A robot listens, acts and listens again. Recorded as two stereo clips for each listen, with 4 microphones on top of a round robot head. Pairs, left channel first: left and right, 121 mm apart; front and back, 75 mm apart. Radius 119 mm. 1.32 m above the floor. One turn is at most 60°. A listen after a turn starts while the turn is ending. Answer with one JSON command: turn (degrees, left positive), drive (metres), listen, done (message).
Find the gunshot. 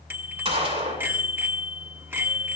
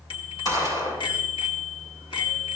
{"turn": -50}
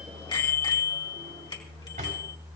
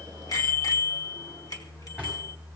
{"done": "Facing where the gunshot came from. I can't hear it now."}